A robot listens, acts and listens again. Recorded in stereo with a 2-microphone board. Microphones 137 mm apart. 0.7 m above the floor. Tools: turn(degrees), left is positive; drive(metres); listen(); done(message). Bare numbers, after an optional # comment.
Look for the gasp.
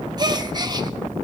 # The gasp: about 30° right or 150° right.
turn(-30)
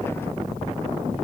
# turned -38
listen()
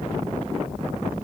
done("I heard a gasp, but can't make it out now. It was about 10° left or 110° right.")